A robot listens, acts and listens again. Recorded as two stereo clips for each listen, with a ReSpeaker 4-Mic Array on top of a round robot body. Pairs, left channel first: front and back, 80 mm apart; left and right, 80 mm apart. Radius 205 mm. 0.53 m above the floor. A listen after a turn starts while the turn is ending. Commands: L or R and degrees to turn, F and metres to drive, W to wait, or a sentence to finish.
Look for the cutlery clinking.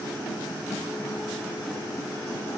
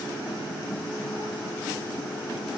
W
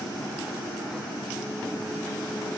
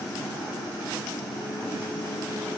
W
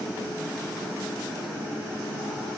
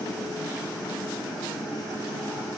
I can't make out cutlery clinking.